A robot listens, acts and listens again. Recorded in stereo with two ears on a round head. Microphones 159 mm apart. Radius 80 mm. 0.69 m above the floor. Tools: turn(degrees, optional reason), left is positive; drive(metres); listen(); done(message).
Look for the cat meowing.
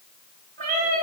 turn(degrees=-40, reason="The cat meowing: about 40° right or 140° right.")
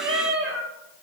turn(degrees=-120, reason="So it is at 120° right.")
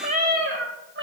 turn(degrees=-60, reason="The cat meowing is now 60° right.")
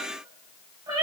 turn(degrees=-25, reason="The cat meowing is now 25° right.")
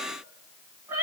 turn(degrees=-15, reason="The cat meowing is now 15° right.")
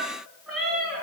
done("Facing the cat meowing, 2 to 4 m away.")